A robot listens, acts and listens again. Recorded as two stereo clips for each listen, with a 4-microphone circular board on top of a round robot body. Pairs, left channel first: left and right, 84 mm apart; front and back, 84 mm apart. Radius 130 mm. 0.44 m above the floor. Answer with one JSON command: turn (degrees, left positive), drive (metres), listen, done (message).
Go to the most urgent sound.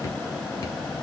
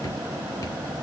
{"listen": true}
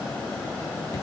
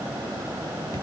{"listen": true}
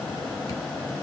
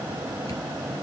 {"done": "I can't make out anything urgent."}